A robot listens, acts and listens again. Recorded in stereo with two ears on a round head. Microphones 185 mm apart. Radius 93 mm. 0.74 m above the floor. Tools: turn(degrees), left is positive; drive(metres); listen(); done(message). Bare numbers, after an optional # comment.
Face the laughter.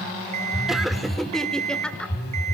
turn(30)
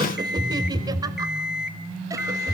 # So it is at 15° right.
turn(-15)
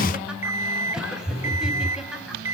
listen()
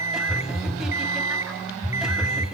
listen()
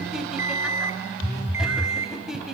done("Facing the laughter, over 4 m away.")